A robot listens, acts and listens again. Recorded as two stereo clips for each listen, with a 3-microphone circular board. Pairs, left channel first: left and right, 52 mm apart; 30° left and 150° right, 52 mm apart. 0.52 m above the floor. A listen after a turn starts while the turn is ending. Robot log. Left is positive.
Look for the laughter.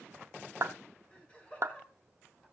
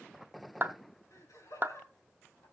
note: The laughter: 20° left.
cmd yaw +20
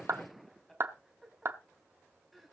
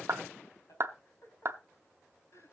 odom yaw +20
end: Facing the laughter.